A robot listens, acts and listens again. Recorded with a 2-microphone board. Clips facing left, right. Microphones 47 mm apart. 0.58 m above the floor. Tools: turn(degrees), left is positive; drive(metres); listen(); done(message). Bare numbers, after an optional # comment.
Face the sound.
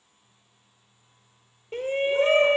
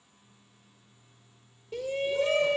# The shout: about 40° left or 140° left.
turn(40)
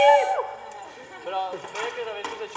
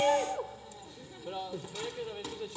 # So it is at 95° left.
turn(95)
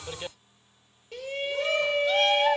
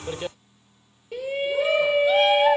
# The shout is now 10° right.
turn(-10)
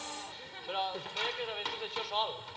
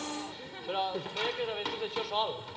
done("Facing the shout.")